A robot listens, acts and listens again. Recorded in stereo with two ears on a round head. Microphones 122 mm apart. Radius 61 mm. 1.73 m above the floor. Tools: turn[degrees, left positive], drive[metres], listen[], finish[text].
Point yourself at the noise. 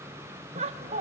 Thought: The laughter: about 45° right or 135° right.
Action: turn[-45]
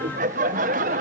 Thought: So it is at 80° right.
Action: turn[-80]
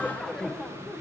Action: finish[Facing the laughter.]